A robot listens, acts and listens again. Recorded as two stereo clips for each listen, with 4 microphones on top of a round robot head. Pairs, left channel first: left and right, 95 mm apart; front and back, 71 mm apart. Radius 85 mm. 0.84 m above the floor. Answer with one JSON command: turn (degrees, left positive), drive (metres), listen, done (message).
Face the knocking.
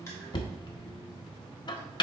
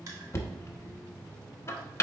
{"turn": 50}
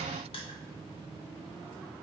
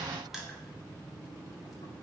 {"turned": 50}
{"listen": true}
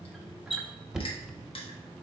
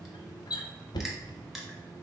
{"done": "Facing the knocking."}